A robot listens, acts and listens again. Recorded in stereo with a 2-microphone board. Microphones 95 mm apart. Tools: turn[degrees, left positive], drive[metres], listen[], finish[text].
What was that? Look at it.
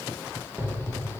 Thought: The explosion: about 30° right or 150° right.
Action: turn[-30]
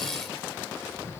Action: listen[]
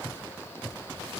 Action: finish[I heard an explosion, but can't make it out now. It was about straight ahead or 120° right.]